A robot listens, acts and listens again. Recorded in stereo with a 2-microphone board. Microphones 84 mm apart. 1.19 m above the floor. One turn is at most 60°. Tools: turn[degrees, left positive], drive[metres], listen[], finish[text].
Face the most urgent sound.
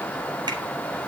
Action: listen[]
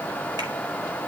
Action: listen[]
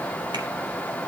Action: finish[I can't make out anything urgent to turn to.]